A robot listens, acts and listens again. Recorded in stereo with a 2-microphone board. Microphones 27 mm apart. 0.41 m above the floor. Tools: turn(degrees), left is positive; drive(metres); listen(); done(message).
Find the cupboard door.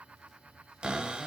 turn(degrees=-45)
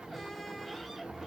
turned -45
listen()
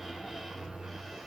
done("Facing the cupboard door, under 1 m away.")